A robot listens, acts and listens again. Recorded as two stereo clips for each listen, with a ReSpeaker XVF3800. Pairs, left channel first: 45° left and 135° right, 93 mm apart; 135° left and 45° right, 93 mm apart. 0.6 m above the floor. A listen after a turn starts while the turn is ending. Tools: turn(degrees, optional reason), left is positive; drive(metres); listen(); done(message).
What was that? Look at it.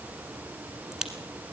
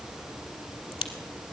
turn(degrees=140, reason="The crack: 140° left.")
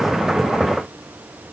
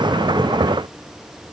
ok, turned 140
done("Facing where the crack came from. I can't hear it now.")